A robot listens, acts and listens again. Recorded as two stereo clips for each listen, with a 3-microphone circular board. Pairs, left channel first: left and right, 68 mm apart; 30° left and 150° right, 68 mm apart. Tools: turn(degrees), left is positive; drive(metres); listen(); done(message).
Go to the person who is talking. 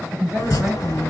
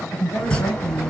drive(metres=1.0)
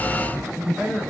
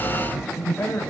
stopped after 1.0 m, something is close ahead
turn(degrees=-15)
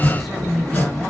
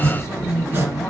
done("Arrived at the woman speaking, straight ahead.")